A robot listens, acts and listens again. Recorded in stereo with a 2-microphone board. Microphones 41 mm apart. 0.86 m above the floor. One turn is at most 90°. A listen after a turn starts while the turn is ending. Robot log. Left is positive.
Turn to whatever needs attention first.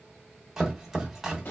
cmd idle
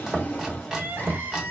note: The crying: about 55° right or 125° right.
cmd yaw -55
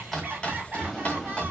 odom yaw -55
note: So it is at 50° right.
cmd yaw -50
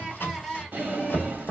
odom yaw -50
note: The crying is now 10° left.
cmd yaw +10
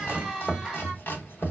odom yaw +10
end: Found it: crying, straight ahead.